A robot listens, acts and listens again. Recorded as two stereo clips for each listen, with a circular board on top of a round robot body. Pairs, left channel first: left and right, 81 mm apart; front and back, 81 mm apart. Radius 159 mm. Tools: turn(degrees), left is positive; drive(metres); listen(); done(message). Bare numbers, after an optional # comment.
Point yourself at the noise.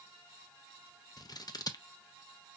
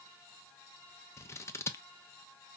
# The scissors: 55° left.
turn(55)
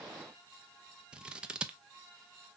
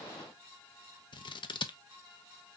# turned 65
# The scissors is now 10° right.
turn(-10)
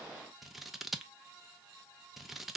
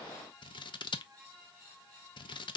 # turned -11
done("Facing the scissors, under 1 m away.")